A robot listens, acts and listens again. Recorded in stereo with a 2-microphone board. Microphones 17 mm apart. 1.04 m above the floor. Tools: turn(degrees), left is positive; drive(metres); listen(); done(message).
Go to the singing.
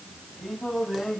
turn(degrees=-25)
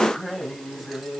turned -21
drive(metres=1.0)
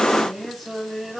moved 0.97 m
drive(metres=1.0)
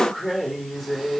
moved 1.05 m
drive(metres=1.0)
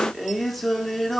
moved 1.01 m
turn(degrees=10)
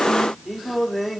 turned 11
drive(metres=1.0)
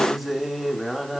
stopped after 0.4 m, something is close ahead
done("Arrived at the singing, straight ahead.")